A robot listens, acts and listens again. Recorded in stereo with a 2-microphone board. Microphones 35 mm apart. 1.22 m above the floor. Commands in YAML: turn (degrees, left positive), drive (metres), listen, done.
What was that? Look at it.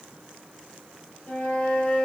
turn: 40
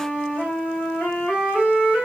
turn: 90
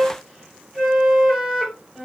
turn: -10
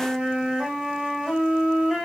done: "Found it: a flute, straight ahead, 1 to 2 m away."